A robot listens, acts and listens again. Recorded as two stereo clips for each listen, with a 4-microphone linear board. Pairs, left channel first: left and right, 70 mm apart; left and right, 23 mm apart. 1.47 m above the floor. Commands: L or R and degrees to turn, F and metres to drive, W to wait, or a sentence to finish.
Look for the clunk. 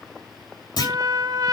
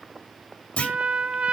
L75
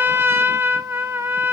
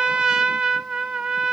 W
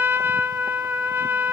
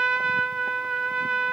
I heard a clunk, but can't make it out now. It was about straight ahead or 30° left.